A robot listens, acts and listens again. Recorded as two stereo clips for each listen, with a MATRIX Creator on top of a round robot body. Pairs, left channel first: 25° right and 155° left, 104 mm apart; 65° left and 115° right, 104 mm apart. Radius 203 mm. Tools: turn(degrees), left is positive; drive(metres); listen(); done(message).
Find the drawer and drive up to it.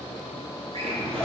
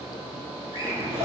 turn(degrees=-175)
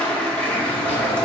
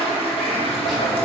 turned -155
turn(degrees=-20)
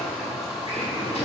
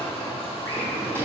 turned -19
drive(metres=1.0)
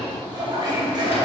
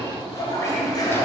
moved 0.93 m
listen()
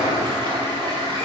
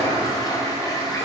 listen()
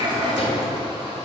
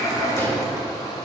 drive(metres=1.0)
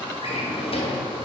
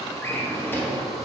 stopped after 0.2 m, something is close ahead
done("I am next to the drawer.")